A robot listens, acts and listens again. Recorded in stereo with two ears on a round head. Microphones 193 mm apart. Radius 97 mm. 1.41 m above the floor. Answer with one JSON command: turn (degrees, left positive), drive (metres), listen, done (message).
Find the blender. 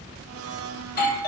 {"turn": -70}
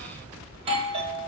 {"listen": true}
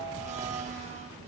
{"turn": -30}
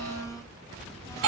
{"turn": 15}
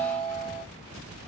{"listen": true}
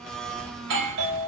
{"done": "Found it: a blender, straight ahead."}